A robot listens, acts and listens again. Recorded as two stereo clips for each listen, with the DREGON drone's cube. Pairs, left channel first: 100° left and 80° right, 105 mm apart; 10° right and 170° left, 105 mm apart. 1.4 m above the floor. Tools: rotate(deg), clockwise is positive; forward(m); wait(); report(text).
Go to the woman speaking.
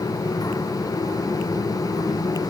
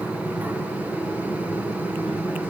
wait()
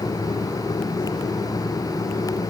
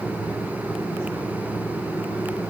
wait()
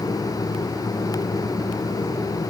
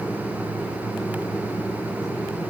report("I can't make out a woman speaking.")